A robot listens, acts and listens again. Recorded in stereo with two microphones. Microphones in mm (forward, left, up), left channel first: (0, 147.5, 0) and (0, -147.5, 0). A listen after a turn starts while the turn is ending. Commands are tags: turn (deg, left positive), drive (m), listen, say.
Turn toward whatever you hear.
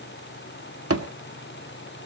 <turn deg="-50"/>
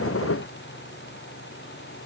<listen/>
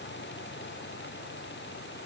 <say>I heard a thud, but can't make it out now. It was about straight ahead or 80° right.</say>